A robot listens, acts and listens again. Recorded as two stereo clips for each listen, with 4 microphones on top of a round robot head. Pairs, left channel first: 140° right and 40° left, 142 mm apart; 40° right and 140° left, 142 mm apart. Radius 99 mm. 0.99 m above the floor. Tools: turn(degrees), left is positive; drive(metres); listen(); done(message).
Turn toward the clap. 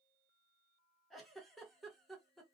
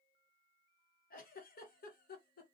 listen()
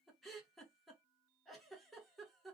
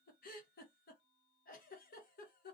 listen()
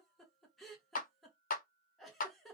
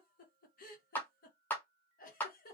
turn(degrees=-120)
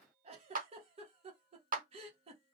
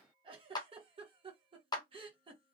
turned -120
turn(degrees=20)
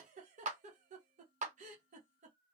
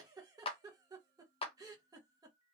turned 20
done("Found it: a clap, straight ahead.")